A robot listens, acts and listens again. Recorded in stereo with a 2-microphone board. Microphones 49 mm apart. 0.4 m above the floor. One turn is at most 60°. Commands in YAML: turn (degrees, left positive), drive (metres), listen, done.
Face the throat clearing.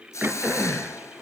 turn: -20
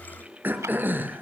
turn: -60
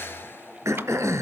turn: -60
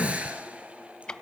turn: -25
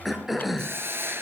done: "Facing the throat clearing."